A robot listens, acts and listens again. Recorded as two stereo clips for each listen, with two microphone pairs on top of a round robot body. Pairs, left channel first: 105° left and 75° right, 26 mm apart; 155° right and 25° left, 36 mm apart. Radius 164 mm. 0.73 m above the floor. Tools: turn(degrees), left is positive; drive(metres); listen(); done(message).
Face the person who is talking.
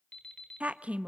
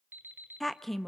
turn(degrees=-75)
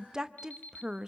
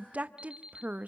turn(degrees=-20)
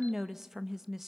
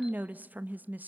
done("Facing the woman speaking.")